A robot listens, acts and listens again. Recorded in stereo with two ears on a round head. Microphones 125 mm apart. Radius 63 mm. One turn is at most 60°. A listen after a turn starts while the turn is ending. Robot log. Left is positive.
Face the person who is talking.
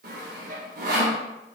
cmd idle
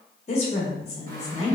note: The woman speaking: about 45° left or 135° left.
cmd yaw +45
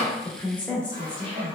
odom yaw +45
note: So it is at 10° left.
cmd yaw +10
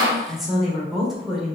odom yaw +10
end: Found it: a woman speaking, straight ahead.